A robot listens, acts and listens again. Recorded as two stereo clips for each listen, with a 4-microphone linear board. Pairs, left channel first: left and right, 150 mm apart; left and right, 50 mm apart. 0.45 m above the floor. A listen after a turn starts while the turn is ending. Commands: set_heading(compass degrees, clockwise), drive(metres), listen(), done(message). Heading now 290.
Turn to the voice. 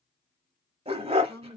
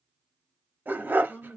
set_heading(275)
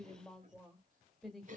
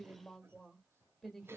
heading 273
done("Found it: a woman speaking, straight ahead.")